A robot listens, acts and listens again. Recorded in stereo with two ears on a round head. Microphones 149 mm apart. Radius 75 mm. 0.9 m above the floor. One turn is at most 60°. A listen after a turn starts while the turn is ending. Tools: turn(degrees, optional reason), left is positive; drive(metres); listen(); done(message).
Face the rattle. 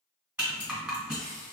turn(degrees=-30)
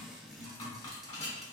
turn(degrees=25, reason="So it is at 25° left.")
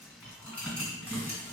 turn(degrees=10, reason="The rattle is now 10° left.")
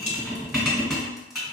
done("Facing the rattle.")